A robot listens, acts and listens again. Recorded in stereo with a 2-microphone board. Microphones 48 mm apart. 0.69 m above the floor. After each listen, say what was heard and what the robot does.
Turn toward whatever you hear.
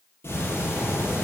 The ticking: about 60° left or 120° left. Turn 60° left.
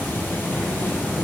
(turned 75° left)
So it is at 45° left. Turn 45° left.
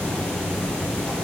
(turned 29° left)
The ticking is now 15° left. Turn 15° left.
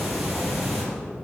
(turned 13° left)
Facing the ticking, over 4 m away.